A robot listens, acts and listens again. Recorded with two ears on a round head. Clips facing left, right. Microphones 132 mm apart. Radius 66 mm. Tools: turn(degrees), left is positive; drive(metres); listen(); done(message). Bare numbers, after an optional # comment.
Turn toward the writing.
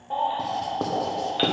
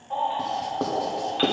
turn(30)
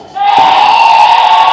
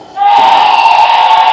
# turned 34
listen()
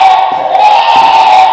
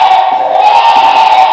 listen()
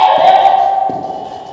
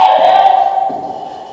done("I heard writing, but can't make it out now. It was about 35° right or 150° left.")